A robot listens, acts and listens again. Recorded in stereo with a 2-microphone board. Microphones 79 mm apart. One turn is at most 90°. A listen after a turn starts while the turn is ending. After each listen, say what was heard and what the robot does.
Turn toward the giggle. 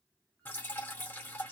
Keep listening.
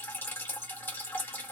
Keep listening.
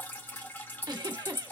The giggle: about 60° right or 120° right. Turn 60° right.
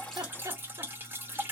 So it is at 45° right. Turn 45° right.
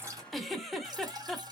Facing the giggle.